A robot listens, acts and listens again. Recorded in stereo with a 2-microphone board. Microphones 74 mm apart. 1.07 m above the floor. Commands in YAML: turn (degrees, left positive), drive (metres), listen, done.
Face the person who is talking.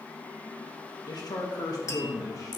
turn: 50
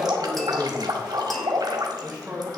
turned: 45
turn: -30
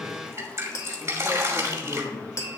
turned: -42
turn: -10
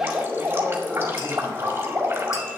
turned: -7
listen: true
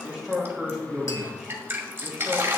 done: "Facing the man speaking, 2 to 4 m away."